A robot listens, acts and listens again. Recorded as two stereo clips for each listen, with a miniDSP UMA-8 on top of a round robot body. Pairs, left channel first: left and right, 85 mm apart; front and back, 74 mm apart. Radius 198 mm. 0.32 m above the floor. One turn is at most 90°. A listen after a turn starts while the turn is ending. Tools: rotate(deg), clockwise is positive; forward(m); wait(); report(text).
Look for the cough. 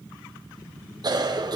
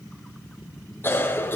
rotate(55)
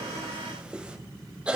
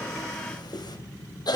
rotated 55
rotate(10)
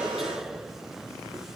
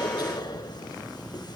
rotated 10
report("Found it: a cough, straight ahead.")